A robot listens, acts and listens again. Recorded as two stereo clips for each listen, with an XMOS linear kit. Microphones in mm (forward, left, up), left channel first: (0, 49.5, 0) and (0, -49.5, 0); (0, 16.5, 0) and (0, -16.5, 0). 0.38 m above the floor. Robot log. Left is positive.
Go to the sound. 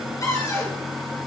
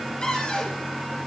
note: The cupboard door: about 35° left or 145° left.
cmd yaw +35
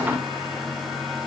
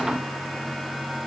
cmd idle
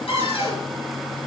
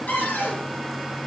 note: So it is at 110° left.
cmd yaw +110
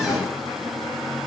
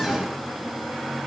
cmd idle
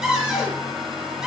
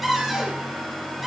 cmd fwd 1.0
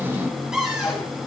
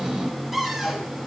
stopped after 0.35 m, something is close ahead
end: Something is in my way. I am facing the cupboard door but have not reached it.